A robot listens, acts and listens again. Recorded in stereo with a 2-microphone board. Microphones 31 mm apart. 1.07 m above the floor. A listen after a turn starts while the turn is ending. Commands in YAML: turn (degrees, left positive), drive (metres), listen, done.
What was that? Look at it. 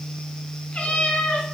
turn: 35
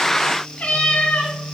turn: 35
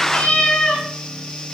turn: 40
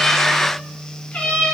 turn: 130
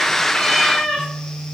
turn: 15
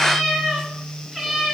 done: "Facing the cat meowing."